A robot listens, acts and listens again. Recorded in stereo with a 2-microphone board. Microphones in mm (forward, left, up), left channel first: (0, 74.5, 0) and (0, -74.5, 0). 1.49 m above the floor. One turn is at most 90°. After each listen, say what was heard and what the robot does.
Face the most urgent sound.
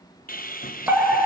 Turn 30° right.
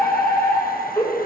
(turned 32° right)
So it is at 20° left. Turn 20° left.
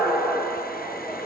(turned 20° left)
Facing the fire alarm.